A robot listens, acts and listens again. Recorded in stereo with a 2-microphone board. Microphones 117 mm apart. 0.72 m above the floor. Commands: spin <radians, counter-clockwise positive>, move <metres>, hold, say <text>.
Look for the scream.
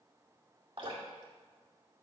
hold
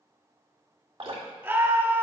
spin -0.35
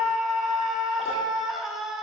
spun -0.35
say Facing the scream, 1 to 2 m away.